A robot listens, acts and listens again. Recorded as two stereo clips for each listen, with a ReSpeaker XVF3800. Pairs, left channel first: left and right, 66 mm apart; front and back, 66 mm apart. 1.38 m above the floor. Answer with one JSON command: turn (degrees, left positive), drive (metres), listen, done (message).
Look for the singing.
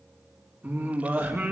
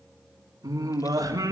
{"turn": -150}
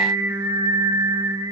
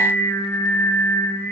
{"turn": -60}
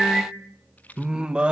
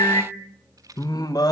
{"turn": -15}
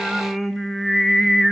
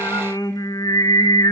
{"done": "Facing the singing."}